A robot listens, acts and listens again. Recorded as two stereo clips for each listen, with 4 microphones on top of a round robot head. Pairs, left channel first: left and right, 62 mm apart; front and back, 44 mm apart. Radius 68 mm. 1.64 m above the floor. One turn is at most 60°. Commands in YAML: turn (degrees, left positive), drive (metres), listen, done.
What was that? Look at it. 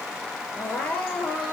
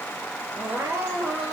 turn: 60
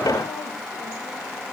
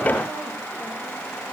turn: 60
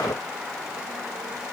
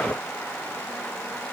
turn: 40
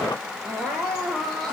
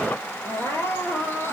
done: "Found it: crying, straight ahead, over 4 m away."